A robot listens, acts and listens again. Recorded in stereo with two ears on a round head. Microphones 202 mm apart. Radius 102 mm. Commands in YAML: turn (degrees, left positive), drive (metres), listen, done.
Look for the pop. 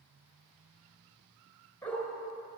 listen: true
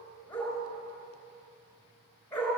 listen: true
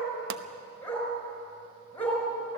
turn: -55
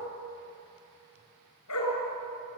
listen: true
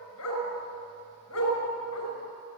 done: "I heard a pop, but can't make it out now. It was about straight ahead or 70° right."